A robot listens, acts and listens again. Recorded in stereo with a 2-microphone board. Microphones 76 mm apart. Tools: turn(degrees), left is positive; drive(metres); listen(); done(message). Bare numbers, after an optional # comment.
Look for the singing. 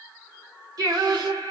# The singing: about 60° right or 120° right.
turn(-60)
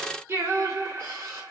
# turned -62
# So it is at 40° right.
turn(-40)
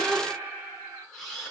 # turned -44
# The singing is now 25° right.
turn(-25)
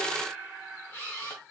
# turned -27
done("Facing the singing, 2 to 4 m away.")